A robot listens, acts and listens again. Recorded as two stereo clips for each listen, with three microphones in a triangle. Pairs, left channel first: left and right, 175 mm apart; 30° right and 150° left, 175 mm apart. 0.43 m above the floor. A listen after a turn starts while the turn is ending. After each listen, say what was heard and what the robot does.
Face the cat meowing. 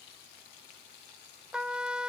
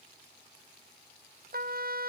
Keep listening.
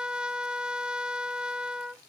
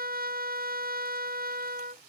Keep listening.
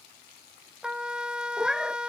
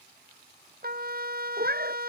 The cat meowing: straight behind. Turn 180° left.
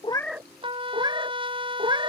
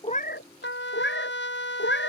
The cat meowing is now 25° right. Turn 25° right.
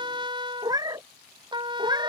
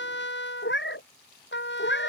The cat meowing is now 20° right. Turn 20° right.
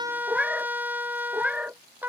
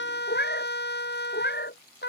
Facing the cat meowing.